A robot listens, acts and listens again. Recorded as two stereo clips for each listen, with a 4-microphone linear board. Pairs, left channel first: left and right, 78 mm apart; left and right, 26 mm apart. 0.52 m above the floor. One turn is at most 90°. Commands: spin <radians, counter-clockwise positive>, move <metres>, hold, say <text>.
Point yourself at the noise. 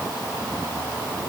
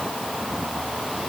hold
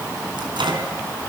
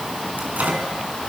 spin -1.57
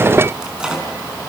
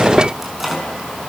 spin -0.17
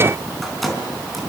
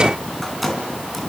say Found it: a microwave, straight ahead, over 4 m away.